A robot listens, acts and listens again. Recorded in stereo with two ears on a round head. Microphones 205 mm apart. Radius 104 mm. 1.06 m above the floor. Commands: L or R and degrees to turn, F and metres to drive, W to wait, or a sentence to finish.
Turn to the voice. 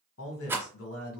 L65
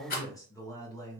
L15
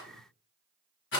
W
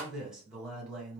Facing the man speaking, 1 to 2 m away.